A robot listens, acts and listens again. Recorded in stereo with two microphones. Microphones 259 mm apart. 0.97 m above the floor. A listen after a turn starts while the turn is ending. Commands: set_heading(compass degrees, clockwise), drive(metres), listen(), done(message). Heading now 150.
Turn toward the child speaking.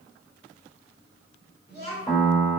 set_heading(115)
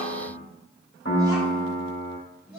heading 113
set_heading(133)
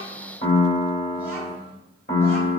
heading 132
listen()
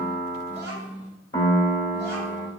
set_heading(142)
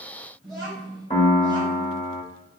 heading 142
done("Facing the child speaking, 2 to 4 m away.")